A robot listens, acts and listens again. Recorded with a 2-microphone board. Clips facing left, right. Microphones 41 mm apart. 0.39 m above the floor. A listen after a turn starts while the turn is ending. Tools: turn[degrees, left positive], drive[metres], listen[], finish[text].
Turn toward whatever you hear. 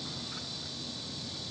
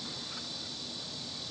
Action: listen[]
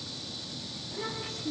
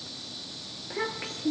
Thought: The child speaking: about 65° right or 115° right.
Action: turn[-65]
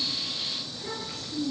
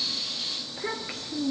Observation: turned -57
Thought: So it is at 40° right.
Action: turn[-40]
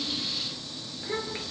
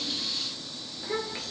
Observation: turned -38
Action: finish[Found it: a child speaking, straight ahead, over 4 m away.]